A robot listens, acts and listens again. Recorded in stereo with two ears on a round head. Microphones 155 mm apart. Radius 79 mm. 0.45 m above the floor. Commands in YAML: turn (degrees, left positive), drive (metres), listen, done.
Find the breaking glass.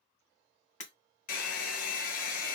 turn: 45
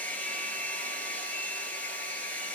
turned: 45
listen: true
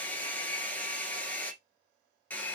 done: "I heard breaking glass, but can't make it out now. It was about straight ahead or 90° left."